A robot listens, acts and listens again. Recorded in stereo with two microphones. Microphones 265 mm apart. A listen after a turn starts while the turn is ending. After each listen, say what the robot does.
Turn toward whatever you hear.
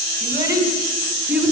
Turn 30° right.
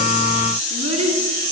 Turn 155° right.
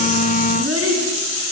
Turn 65° right.
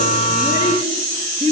Turn 15° right.
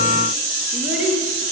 Facing the child speaking, over 4 m away.